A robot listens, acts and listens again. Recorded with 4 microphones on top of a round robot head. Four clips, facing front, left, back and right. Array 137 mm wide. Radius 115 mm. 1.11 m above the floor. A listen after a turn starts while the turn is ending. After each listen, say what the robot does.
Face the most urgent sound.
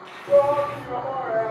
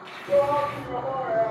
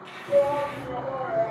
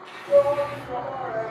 Turn 15° left.
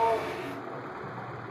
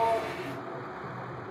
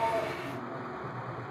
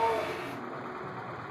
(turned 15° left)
Keep listening.
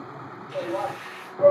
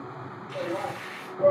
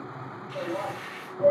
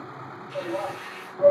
Found it: a shout, straight ahead, 1 to 2 m away.